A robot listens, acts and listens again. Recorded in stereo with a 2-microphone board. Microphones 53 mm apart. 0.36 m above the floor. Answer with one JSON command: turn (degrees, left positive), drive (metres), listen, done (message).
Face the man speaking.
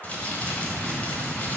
{"listen": true}
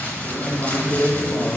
{"turn": 45}
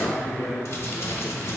{"turn": 75}
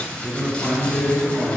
{"turn": 30}
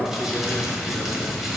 {"done": "Found it: a man speaking, straight ahead, over 4 m away."}